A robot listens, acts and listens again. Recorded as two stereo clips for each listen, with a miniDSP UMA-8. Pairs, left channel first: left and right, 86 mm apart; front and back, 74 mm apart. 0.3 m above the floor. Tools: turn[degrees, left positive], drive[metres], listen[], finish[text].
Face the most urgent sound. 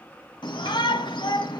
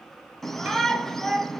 Thought: The shout: 85° left.
Action: turn[85]
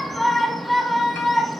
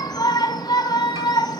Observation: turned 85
Action: finish[Found it: a shout, straight ahead, 1 to 2 m away.]